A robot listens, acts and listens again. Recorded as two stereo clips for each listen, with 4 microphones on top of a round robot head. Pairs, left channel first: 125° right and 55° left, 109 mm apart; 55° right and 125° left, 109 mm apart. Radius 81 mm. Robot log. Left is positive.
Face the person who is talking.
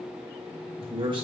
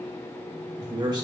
note: The man speaking: 85° left.
cmd yaw +85
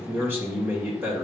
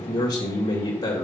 note: The man speaking is now 10° right.
cmd yaw -10
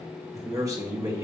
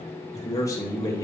end: Facing the man speaking, 2 to 4 m away.